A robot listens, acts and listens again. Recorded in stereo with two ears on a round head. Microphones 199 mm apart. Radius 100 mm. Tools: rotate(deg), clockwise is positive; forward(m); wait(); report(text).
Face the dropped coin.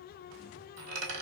rotate(90)
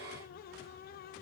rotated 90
report("I heard a dropped coin from this way, but can't make it out now.")